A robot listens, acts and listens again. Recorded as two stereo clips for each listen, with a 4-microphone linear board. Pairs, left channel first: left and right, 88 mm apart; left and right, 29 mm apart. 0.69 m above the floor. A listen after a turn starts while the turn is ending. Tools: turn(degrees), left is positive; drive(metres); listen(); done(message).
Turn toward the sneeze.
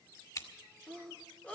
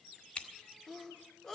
turn(degrees=15)
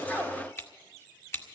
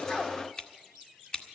listen()
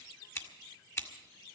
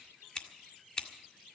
done("I heard a sneeze, but can't make it out now. It was about straight ahead or 150° left.")